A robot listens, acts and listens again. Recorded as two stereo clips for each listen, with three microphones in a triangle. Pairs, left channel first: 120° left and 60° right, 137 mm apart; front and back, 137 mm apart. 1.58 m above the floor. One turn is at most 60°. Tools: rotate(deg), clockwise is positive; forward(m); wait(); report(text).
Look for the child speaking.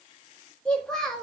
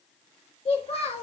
rotate(-30)
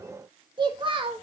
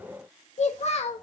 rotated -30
rotate(20)
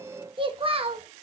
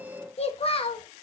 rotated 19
rotate(35)
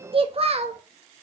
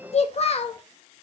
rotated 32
rotate(30)
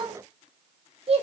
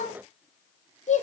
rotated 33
rotate(20)
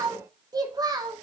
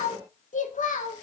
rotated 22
report("Found it: a child speaking, straight ahead.")